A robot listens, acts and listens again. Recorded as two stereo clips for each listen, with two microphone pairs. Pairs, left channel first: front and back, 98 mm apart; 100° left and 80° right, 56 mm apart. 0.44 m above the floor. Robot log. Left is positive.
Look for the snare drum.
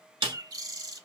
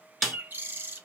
note: The snare drum: 170° right.
cmd yaw -170
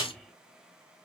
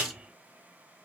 note: The snare drum is now 25° right.
cmd yaw -25
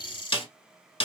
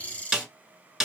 end: Found it: a snare drum, straight ahead, under 1 m away.